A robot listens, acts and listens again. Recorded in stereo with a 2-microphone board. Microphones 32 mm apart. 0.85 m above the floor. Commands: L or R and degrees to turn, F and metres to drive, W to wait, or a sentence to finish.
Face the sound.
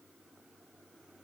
W
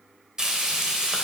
R20
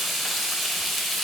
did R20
Facing the frying.